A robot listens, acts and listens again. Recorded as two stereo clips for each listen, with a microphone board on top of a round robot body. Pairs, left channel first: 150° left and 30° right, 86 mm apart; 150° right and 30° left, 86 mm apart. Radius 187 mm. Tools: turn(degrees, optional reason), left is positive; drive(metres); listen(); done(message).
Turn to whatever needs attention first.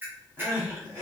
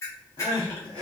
turn(degrees=-135, reason="The crying: 135° right.")
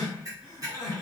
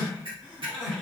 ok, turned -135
turn(degrees=-20, reason="The crying is now 20° right.")
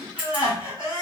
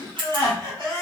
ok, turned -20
done("Facing the crying.")